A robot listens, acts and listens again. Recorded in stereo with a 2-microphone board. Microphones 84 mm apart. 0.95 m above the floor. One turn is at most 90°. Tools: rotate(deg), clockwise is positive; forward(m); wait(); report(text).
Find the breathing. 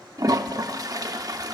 wait()
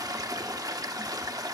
wait()
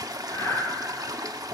rotate(-40)
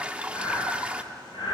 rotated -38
rotate(-90)
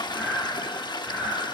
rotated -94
report("Found it: breathing, straight ahead.")